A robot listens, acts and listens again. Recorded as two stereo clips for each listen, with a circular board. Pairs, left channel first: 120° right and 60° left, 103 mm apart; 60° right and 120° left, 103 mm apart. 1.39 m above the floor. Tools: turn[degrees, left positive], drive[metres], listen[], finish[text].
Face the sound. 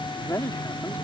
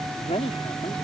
Thought: The man speaking: 55° right.
Action: turn[-55]
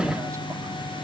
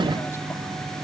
Action: listen[]
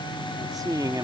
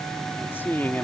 Thought: The man speaking is now 10° left.
Action: turn[10]
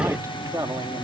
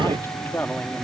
Thought: The man speaking is now 10° left.
Action: turn[10]
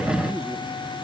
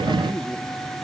Action: listen[]
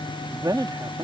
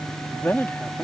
Thought: The man speaking is now 15° left.
Action: turn[15]
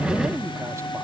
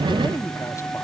Action: listen[]
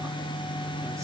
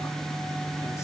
Action: listen[]
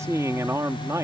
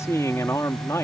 Action: finish[Facing the man speaking.]